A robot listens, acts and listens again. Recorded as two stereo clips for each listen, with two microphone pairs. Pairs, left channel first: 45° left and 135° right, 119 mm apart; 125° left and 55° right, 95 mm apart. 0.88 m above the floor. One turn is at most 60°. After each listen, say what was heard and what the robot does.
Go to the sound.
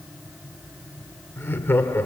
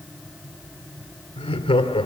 The laughter: 115° left. Turn 60° left.
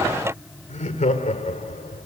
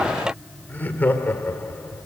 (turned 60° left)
The laughter is now 55° left. Turn 55° left.
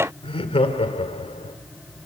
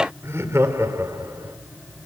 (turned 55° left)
Drive 1.0 m forward.
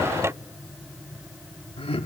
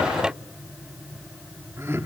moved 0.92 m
Drive 1.0 m forward.
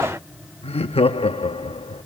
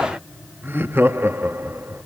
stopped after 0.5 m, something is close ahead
The laughter is now 10° left. Turn 10° left.
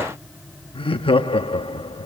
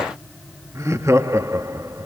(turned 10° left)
I am next to the laughter.